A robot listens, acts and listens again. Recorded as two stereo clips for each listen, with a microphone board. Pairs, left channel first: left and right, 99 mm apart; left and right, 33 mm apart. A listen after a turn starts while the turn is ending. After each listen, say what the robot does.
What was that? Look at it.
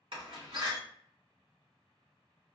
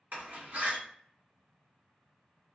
Turn 65° right.
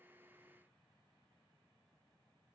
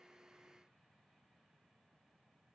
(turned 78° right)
Keep listening.
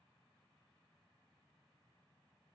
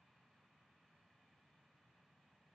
I heard a door slam, but can't make it out now. It was about 10° left or 35° right.